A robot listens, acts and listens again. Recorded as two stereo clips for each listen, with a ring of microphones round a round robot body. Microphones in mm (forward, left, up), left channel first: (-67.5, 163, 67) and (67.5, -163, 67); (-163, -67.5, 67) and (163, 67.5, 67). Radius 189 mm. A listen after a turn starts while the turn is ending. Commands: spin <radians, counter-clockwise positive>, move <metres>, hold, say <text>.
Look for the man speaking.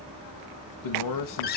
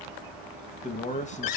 spin 2.36
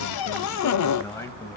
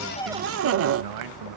hold
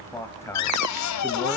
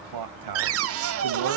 spin 0.52
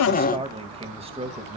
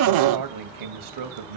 say Found it: a man speaking, straight ahead.